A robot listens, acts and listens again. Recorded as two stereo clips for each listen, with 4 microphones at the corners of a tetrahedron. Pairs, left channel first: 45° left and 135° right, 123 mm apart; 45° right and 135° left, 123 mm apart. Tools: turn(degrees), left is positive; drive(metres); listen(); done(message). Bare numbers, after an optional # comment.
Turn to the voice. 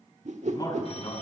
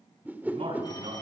# The man speaking: 100° left.
turn(100)
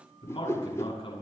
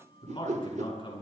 done("Facing the man speaking, over 4 m away.")